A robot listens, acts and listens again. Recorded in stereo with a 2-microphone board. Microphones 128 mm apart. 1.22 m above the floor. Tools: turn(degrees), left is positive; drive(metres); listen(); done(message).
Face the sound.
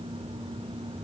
listen()
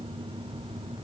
listen()
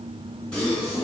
turn(degrees=30)
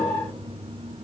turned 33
listen()
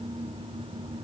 done("I heard a gasp, but can't make it out now. It was about 25° right or 140° left.")